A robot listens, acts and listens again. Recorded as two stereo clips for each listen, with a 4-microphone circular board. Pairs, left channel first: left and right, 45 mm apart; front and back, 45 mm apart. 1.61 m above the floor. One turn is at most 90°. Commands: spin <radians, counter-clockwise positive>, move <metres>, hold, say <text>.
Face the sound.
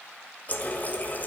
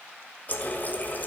spin 0.79
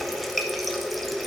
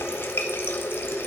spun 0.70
say Found it: a running tap, straight ahead, 1 to 2 m away.